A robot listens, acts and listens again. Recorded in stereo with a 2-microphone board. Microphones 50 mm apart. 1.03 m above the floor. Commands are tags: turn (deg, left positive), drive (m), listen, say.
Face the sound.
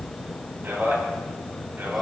<turn deg="-45"/>
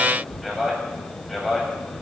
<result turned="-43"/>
<say>Facing the man speaking.</say>